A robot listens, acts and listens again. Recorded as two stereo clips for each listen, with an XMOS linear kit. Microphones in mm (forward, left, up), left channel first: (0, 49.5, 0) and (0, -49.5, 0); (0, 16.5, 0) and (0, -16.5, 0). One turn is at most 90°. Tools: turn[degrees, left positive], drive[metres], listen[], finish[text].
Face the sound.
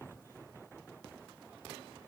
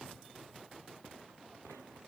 Action: listen[]
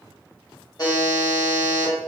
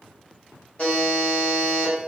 Thought: The buzzer: about 40° left or 140° left.
Action: turn[40]
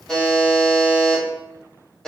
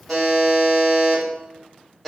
Action: finish[Facing the buzzer, 1 to 2 m away.]